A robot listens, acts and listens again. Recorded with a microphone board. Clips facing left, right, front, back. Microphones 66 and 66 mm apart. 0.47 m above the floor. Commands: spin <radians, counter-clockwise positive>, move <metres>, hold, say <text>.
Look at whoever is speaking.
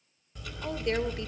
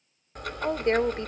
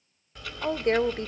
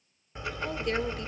spin -0.79
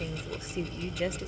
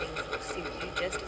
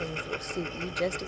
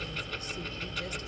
say Found it: a woman speaking, straight ahead.